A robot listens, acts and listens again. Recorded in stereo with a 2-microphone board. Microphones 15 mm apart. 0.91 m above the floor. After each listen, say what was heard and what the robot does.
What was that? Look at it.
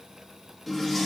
Turn 30° left.
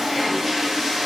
So it is at 25° right. Turn 25° right.
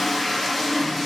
Facing the toilet flushing, under 1 m away.